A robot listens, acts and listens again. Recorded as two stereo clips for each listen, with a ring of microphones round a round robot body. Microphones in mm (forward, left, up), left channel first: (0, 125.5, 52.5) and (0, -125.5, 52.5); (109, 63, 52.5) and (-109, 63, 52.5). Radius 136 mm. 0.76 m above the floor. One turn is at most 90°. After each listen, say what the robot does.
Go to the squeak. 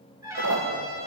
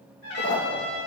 Turn 60° right.
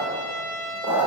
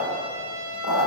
Turn 10° right.
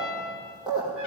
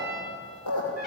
Drive 1.0 m forward.
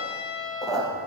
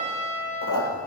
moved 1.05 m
Drive 1.0 m forward.
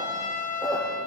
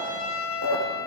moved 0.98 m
Drive 1.0 m forward.
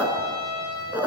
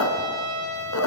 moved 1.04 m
Drive 1.0 m forward.
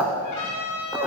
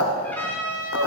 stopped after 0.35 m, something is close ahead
I am next to the squeak.